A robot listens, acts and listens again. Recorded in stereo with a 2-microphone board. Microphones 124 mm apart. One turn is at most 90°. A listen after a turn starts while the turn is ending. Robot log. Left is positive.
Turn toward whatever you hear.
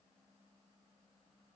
cmd idle
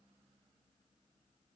cmd idle
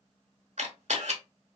note: The camera shutter: about 70° right or 110° right.
cmd yaw -70
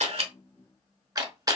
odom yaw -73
note: So it is at 35° right.
cmd yaw -35
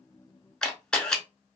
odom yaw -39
end: Facing the camera shutter.